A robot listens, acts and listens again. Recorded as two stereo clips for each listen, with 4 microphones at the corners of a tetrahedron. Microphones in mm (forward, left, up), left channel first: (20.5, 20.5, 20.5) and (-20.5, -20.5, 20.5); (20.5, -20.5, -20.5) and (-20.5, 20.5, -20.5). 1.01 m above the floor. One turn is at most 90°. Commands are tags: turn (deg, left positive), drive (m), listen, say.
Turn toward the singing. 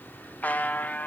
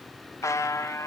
<listen/>
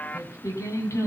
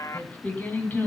<turn deg="15"/>
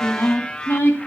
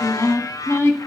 <turn deg="-10"/>
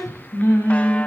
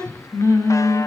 <turn deg="-10"/>
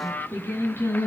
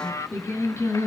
<say>Found it: singing, straight ahead, over 4 m away.</say>